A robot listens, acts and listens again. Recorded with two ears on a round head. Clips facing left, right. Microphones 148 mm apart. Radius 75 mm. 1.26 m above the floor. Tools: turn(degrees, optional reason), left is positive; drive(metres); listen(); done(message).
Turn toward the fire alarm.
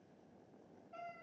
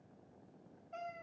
listen()
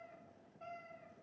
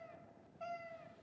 listen()
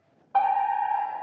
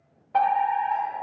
turn(degrees=-20, reason="The fire alarm: about 20° right or 160° right.")
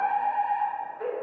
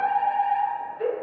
turn(degrees=-140, reason="So it is at 140° right.")
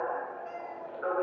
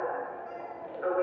turn(degrees=-25, reason="The fire alarm is now 25° right.")
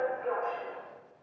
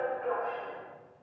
done("Found it: a fire alarm, straight ahead, 1 to 2 m away.")